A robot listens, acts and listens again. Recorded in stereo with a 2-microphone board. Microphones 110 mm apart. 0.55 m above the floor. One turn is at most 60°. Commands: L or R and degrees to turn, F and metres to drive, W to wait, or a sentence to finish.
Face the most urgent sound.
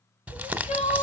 L60
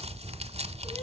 L30
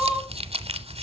R10
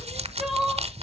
Facing the crying, 1 to 2 m away.